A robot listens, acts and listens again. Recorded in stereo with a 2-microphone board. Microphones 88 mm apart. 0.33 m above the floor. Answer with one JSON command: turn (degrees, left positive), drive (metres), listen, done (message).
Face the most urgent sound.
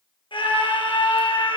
{"turn": 90}
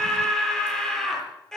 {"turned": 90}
{"done": "Facing the scream."}